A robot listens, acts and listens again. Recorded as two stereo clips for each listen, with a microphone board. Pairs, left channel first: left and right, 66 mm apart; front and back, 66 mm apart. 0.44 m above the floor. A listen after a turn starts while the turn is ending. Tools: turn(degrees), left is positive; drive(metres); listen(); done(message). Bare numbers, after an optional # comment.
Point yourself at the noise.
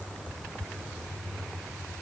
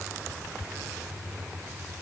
listen()
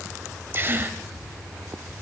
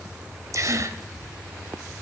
# The gasp: 140° right.
turn(-140)
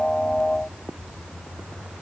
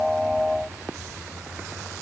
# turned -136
done("I heard a gasp from this way, but can't make it out now.")